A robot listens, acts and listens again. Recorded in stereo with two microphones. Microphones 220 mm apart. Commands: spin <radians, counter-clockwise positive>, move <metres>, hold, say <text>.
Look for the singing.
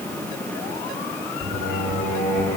spin 0.87
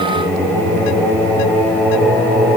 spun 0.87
say Found it: singing, straight ahead, over 4 m away.